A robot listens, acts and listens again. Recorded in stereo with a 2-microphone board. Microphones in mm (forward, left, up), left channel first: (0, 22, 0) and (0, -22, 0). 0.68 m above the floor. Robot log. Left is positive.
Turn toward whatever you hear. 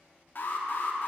note: The alarm: about 50° left or 130° left.
cmd yaw +50
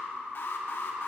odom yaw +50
note: So it is at 65° left.
cmd yaw +65
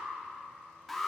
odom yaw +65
end: Found it: an alarm, straight ahead, under 1 m away.